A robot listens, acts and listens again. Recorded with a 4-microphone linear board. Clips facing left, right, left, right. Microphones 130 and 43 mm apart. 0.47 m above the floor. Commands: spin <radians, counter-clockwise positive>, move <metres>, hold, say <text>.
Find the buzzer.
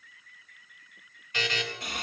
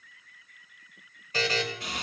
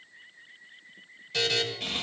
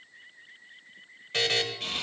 spin -0.61
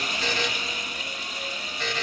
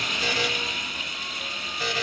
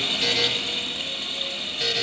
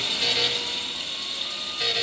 spin -0.17
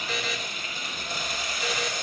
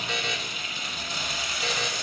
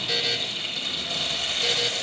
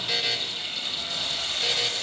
say Found it: a buzzer, straight ahead, 2 to 4 m away.